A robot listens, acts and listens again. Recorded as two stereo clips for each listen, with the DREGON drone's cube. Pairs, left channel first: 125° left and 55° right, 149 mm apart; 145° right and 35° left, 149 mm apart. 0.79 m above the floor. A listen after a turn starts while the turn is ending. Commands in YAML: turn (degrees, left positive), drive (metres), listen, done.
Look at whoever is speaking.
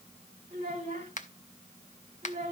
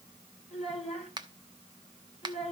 turn: -100
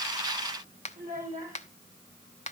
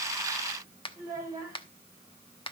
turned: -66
turn: -35
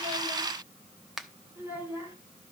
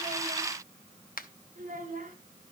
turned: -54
turn: 20
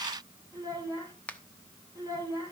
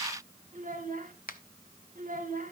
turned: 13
turn: 10
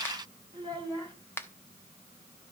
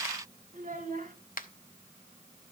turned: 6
done: "Facing the child speaking, 2 to 4 m away."